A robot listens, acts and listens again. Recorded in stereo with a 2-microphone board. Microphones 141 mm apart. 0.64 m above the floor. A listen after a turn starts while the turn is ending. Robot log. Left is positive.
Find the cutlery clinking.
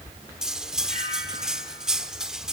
cmd yaw -30
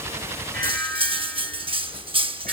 note: So it is at 145° right.
cmd yaw -145
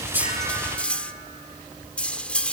note: The cutlery clinking is now 10° left.
cmd yaw +10
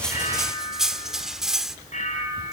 end: Found it: cutlery clinking, straight ahead, under 1 m away.